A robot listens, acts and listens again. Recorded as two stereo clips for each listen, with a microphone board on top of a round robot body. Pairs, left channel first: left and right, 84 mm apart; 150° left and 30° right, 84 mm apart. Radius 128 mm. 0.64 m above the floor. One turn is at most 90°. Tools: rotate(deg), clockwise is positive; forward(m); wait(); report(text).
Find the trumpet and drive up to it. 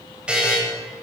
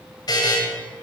wait()
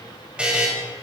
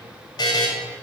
wait()
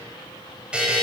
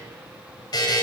report("I can't make out a trumpet, only a buzzer.")